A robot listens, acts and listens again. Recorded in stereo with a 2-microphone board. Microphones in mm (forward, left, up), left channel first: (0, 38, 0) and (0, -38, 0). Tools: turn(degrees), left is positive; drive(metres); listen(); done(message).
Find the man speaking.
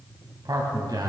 turn(degrees=-60)
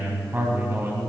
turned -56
turn(degrees=-35)
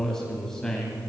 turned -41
turn(degrees=10)
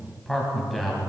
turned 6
done("Facing the man speaking, 2 to 4 m away.")